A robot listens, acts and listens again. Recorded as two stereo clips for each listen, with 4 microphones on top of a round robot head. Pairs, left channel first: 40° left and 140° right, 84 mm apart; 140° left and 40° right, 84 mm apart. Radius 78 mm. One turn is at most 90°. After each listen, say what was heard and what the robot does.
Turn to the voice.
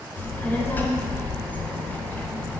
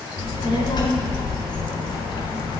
The child speaking: 110° left. Turn 90° left.
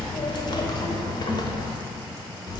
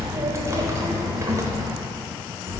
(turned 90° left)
The child speaking is now 15° left. Turn 15° left.
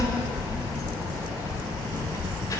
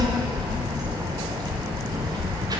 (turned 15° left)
Found it: a child speaking, straight ahead, 1 to 2 m away.